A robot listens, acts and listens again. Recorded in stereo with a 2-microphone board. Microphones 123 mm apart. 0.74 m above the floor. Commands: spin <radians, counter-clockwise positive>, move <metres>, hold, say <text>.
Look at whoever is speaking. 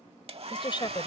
spin 0.70
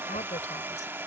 hold
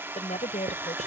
spin 1.66
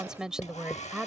say Facing the woman speaking.